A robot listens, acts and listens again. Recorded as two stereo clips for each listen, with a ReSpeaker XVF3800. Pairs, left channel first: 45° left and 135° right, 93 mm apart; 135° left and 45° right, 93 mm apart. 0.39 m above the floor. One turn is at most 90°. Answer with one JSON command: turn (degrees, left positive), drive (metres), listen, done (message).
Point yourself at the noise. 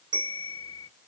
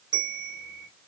{"turn": -90}
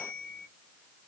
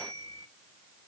{"done": "Found it: a bell, straight ahead, under 1 m away."}